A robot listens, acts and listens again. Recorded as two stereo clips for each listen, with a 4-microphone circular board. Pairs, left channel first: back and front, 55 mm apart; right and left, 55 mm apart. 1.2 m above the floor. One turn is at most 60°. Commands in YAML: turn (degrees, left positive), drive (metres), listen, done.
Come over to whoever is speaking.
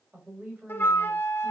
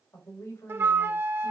turn: -55
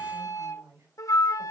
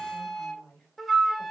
drive: 1.0
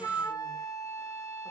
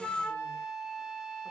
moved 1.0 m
listen: true
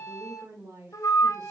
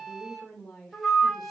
drive: 1.0
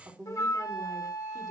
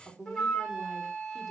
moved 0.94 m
drive: 1.0
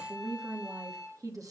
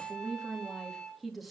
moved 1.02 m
drive: 1.0
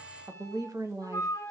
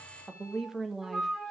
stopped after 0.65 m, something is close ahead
turn: 10
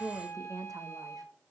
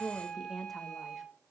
done: "I am next to the woman speaking."